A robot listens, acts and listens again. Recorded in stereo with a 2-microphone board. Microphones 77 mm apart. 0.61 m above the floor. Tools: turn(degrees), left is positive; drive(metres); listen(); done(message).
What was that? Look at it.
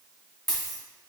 turn(degrees=30)
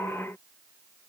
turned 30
listen()
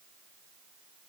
done("I heard a dropped coin, but can't make it out now. It was about 25° right or 145° left.")